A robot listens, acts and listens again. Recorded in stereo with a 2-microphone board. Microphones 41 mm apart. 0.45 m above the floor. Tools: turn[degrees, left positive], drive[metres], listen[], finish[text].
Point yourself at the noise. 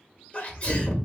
Thought: The sneeze: about 35° left or 145° left.
Action: turn[35]
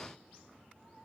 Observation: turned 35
Action: listen[]
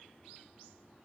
Action: finish[I heard a sneeze, but can't make it out now. It was about straight ahead or 110° left.]